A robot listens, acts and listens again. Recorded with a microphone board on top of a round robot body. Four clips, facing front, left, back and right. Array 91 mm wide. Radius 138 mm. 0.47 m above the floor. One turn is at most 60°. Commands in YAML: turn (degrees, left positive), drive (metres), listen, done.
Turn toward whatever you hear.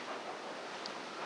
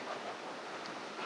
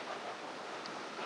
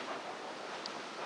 listen: true
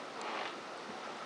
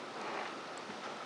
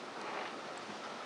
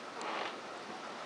listen: true
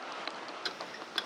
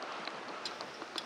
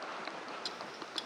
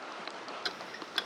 turn: -60
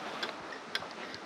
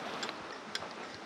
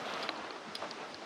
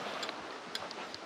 turn: 15
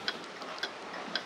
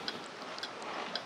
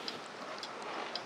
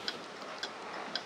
done: "Found it: ticking, straight ahead."